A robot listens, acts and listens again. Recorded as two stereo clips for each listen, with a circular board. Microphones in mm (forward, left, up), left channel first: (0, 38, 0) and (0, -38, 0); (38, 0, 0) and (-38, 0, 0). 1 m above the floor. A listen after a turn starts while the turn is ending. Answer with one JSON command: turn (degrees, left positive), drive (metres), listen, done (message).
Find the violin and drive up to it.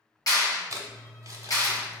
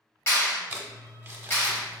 {"listen": true}
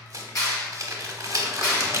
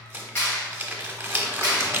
{"listen": true}
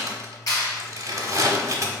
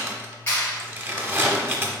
{"done": "I can't make out a violin to turn to."}